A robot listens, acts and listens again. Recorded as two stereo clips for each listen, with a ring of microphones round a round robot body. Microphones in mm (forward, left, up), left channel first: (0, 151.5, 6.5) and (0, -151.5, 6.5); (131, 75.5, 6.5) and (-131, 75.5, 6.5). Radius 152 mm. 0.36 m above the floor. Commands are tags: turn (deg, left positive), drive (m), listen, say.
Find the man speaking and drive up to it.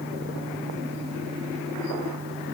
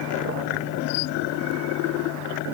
<listen/>
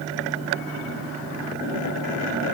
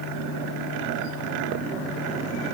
<listen/>
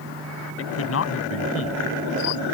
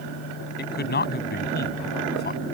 <turn deg="50"/>
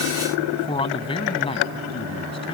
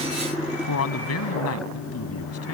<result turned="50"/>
<turn deg="20"/>
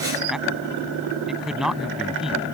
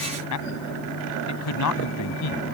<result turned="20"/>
<drive m="1.0"/>
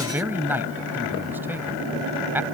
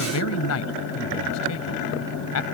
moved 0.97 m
<drive m="1.0"/>
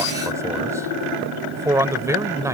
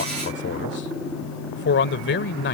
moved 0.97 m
<turn deg="-15"/>
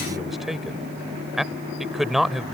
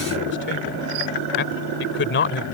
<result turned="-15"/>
<drive m="1.0"/>
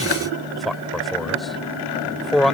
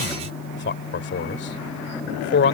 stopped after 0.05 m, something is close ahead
<say>Arrived at the man speaking, straight ahead.</say>